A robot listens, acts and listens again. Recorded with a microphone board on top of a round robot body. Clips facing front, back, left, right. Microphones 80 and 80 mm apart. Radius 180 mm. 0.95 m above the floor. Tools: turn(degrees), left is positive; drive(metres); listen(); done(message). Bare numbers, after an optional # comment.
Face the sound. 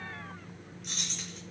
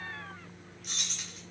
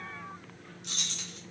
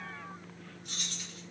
# The keys jangling: 90° left.
turn(90)
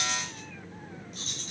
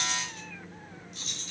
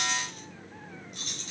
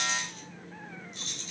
# The keys jangling is now 50° left.
turn(50)
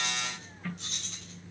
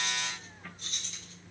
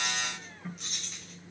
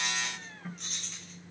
done("Found it: keys jangling, straight ahead, 2 to 4 m away.")